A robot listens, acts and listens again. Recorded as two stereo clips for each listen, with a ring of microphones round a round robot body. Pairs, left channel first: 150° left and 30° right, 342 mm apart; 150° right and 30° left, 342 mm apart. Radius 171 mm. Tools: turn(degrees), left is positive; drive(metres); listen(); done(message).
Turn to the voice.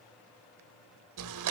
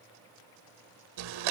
listen()
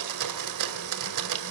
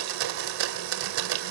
listen()
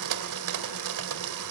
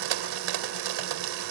done("I can't make out anyone speaking, only a blender.")